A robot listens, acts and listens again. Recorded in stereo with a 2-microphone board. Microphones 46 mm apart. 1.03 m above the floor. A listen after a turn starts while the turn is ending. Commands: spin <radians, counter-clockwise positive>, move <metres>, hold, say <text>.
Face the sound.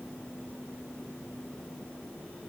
hold
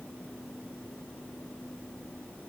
hold
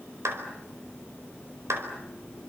spin -1.57
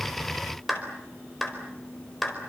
say Found it: a clap, straight ahead, over 4 m away.